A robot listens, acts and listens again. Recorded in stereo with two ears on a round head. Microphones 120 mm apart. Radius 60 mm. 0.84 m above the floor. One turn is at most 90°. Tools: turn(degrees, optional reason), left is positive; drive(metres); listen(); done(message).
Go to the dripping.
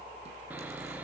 listen()
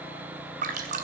turn(degrees=-60, reason="The dripping: about 60° right or 120° right.")
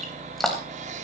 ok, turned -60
drive(metres=1.0)
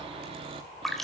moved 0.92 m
drive(metres=1.0)
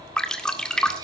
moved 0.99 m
drive(metres=1.0)
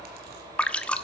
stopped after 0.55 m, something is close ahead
turn(degrees=10, reason="The dripping is now 10° left.")
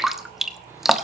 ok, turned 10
done("Arrived at the dripping, straight ahead.")